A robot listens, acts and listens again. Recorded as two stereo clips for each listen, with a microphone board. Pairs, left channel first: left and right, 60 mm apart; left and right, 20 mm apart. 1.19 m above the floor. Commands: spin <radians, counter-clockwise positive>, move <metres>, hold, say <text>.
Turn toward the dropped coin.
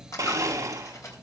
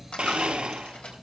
spin 1.05
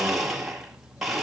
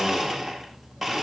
hold
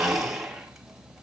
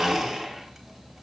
say I heard a dropped coin, but can't make it out now. It was about straight ahead or 60° left.